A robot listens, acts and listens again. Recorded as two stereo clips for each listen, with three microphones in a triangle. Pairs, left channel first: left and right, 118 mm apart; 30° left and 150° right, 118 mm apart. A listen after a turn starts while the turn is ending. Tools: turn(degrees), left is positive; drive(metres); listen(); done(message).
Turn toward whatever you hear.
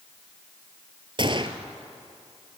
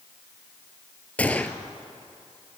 turn(degrees=-45)
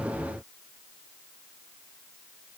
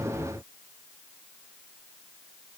done("Facing where the gunshot came from. I can't hear it now.")